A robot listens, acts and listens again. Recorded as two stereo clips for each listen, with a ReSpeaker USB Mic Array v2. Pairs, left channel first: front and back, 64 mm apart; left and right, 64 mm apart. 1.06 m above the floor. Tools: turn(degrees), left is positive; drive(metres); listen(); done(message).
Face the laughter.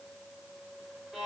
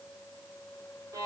listen()
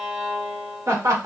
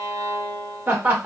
turn(degrees=-150)
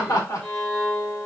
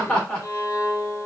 turn(degrees=20)
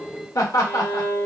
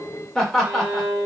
turn(degrees=10)
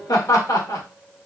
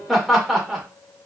done("Found it: laughter, straight ahead, 1 to 2 m away.")